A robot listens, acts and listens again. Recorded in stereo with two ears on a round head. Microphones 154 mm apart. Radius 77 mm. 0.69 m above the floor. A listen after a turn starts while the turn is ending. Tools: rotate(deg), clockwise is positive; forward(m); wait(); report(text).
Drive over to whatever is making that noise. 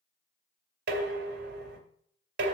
rotate(65)
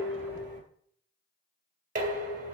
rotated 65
rotate(50)
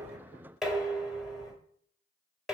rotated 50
forward(1.0)
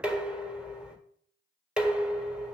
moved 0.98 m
forward(1.0)
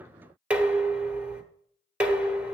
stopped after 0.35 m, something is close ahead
rotate(10)
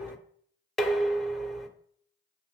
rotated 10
report("I am next to the dishes clattering.")